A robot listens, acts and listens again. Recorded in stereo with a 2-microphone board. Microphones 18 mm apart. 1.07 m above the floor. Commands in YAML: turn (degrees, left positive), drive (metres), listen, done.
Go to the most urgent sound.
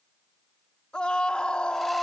turn: 55
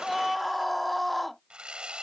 drive: 1.0
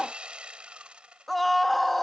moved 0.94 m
drive: 1.0
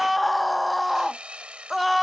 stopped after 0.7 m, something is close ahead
done: "Arrived at the scream, straight ahead."